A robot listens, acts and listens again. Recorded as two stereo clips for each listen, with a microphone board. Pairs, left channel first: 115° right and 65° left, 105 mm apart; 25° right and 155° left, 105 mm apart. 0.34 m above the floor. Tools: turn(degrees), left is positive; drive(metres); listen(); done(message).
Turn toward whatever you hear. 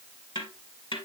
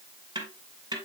turn(degrees=-155)
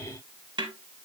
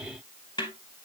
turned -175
turn(degrees=20)
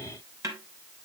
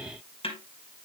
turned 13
turn(degrees=10)
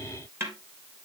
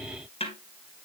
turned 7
done("Found it: a snare drum, straight ahead, 2 to 4 m away.")